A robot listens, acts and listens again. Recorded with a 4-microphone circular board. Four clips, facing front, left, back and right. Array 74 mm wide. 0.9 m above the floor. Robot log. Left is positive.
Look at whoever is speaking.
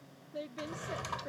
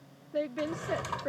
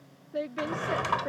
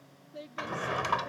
note: The woman speaking: 130° left.
cmd yaw +130
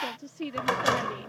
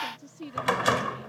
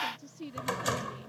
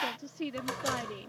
note: The woman speaking is now 30° right.
cmd yaw -30
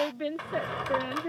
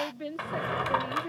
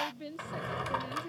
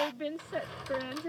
note: The woman speaking is now 10° right.
cmd yaw -10
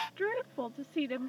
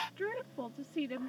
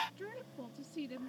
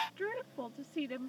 end: Facing the woman speaking.